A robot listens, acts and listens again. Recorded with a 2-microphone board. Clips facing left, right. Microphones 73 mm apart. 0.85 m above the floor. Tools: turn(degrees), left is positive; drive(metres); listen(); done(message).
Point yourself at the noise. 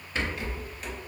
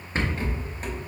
turn(degrees=-35)
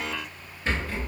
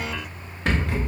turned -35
turn(degrees=-105)
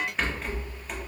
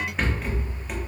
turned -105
done("Facing the rattle, under 1 m away.")